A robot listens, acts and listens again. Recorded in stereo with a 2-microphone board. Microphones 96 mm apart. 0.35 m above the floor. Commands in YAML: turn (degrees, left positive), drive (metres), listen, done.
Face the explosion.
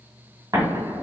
turn: -40
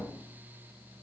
listen: true
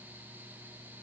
done: "I heard an explosion, but can't make it out now. It was about straight ahead or 100° right."